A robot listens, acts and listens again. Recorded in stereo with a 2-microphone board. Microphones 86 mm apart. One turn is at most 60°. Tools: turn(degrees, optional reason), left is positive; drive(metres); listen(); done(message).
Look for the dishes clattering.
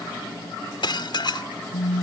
turn(degrees=60, reason="The dishes clattering: about 60° left or 120° left.")
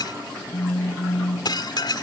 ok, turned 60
turn(degrees=60, reason="So it is at 60° left.")
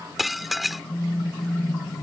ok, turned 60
done("Facing the dishes clattering.")